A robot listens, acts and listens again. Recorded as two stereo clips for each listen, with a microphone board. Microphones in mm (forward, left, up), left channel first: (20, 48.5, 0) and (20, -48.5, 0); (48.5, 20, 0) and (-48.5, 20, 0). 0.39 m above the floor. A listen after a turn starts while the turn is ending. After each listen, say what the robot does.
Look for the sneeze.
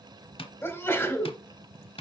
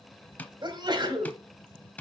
Turn 150° left.
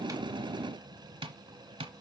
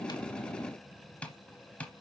I heard a sneeze from this way, but can't make it out now.